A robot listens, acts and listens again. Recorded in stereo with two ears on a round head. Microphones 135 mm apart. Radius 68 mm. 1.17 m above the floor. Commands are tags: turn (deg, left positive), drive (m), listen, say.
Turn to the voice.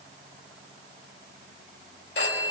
<listen/>
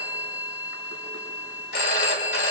<listen/>
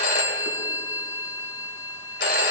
<say>I can't make out anyone speaking to turn to.</say>